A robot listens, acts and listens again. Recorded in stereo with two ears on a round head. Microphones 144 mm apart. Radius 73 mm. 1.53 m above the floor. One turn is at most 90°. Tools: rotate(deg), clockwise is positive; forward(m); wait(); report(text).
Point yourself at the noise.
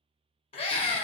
rotate(-30)
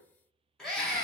report("Found it: a scream, straight ahead, 1 to 2 m away.")